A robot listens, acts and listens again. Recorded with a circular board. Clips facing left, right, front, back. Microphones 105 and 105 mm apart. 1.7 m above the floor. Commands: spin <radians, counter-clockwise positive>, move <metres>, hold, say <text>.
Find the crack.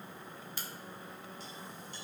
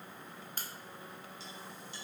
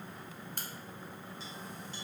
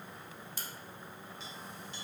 spin -0.70
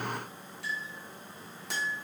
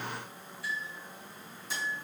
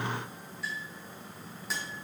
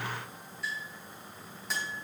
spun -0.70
say Facing where the crack came from. I can't hear it now.